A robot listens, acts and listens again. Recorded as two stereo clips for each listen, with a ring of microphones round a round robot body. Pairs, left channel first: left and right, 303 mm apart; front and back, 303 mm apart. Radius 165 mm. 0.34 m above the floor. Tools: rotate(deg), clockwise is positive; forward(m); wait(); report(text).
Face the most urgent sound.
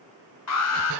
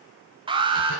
rotate(-110)
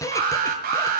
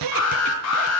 rotate(30)
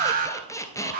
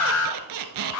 rotate(30)
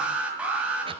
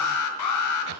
report("Found it: an alarm, straight ahead, 1 to 2 m away.")